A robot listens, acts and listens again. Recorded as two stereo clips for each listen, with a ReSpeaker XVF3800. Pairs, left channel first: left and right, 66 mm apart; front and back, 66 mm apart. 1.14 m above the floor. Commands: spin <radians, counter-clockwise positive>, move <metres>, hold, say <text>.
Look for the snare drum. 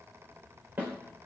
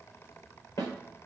spin -0.52
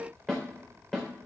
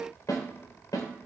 spin 0.17
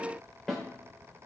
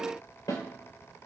say Facing the snare drum.